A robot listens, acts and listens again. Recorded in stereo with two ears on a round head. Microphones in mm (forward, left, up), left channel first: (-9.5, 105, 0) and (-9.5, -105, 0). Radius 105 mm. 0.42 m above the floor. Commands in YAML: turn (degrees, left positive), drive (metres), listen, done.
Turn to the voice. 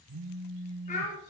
turn: 30
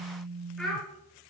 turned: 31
done: "Found it: a child speaking, straight ahead, 2 to 4 m away."